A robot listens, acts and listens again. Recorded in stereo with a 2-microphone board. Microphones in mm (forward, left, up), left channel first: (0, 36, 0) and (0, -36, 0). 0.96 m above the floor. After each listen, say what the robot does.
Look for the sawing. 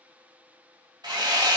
Turn 90° right.
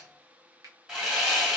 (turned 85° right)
Turn 15° right.
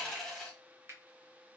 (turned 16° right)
Facing the sawing.